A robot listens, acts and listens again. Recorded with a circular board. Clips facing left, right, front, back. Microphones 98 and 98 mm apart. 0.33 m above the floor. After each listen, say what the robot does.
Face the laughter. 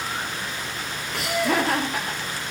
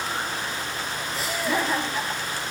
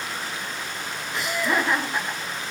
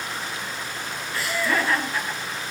Turn 70° left.
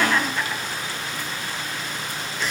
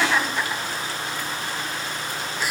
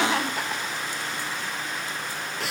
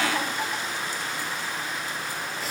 Turn 10° right.
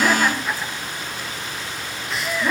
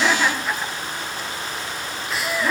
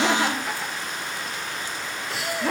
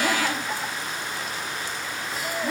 Found it: laughter, straight ahead, 2 to 4 m away.